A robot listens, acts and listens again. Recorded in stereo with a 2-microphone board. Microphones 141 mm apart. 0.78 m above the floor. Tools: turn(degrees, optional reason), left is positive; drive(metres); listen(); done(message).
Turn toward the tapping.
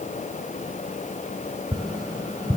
turn(degrees=-30, reason="The tapping: about 30° right or 150° right.")
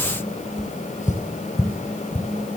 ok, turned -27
done("Facing the tapping, 1 to 2 m away.")